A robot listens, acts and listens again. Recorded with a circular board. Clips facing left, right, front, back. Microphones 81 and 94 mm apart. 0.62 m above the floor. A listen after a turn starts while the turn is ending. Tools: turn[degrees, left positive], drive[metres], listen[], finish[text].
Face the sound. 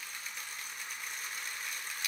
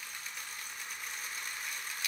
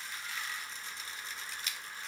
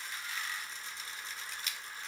Action: listen[]
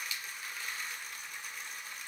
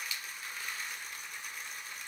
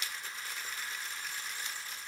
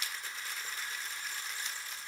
Action: listen[]
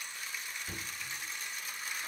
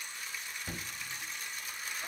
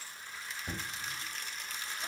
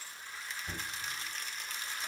Thought: The knocking: 50° right.
Action: turn[-50]
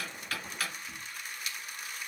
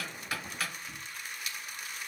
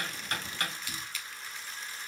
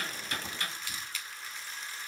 Action: finish[Found it: knocking, straight ahead.]